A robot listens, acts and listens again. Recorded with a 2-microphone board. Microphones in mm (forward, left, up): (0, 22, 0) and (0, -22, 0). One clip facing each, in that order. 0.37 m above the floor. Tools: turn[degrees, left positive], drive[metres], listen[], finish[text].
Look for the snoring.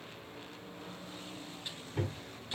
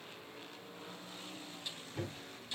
Action: listen[]
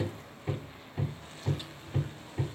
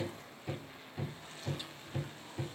Action: listen[]
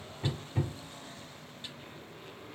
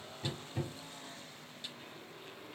Action: finish[I can't make out snoring, only hammering.]